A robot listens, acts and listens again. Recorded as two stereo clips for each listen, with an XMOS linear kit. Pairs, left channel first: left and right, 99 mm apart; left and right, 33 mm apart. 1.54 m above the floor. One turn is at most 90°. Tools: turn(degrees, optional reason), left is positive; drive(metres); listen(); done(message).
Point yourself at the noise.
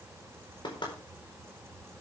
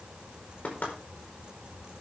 turn(degrees=50, reason="The knocking: about 50° left or 130° left.")
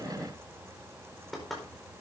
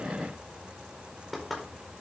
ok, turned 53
done("Found it: knocking, straight ahead, over 4 m away.")